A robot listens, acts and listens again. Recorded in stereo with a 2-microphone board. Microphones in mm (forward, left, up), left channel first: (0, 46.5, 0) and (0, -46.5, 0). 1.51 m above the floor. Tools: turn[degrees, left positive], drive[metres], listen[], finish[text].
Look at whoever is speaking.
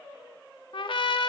Action: listen[]
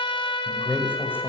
Thought: The man speaking: about 25° left or 155° left.
Action: turn[25]
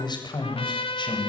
Thought: So it is at 120° left.
Action: turn[120]
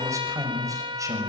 Thought: The man speaking is now 35° right.
Action: turn[-35]
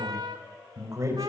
Thought: The man speaking is now 35° right.
Action: turn[-35]
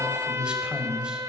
Thought: The man speaking is now 10° right.
Action: turn[-10]
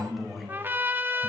Action: finish[Facing the man speaking.]